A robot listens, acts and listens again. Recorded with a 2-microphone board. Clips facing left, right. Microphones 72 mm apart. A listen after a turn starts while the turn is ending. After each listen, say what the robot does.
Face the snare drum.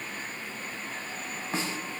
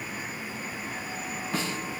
Turn 30° left.
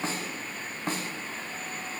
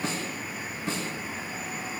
Turn 120° left.
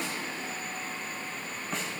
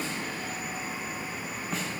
Found it: a snare drum, straight ahead.